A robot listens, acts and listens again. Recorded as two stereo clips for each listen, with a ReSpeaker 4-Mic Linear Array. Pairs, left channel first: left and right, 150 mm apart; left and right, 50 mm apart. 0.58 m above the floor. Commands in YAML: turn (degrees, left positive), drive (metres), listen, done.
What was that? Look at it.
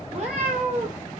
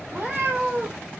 turn: -55
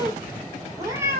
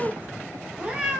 turn: -15
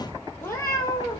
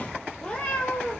turn: 25
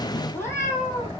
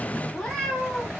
turn: 20
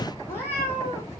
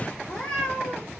turn: 15
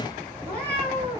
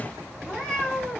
turn: 10
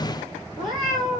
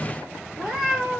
done: "Found it: a cat meowing, straight ahead."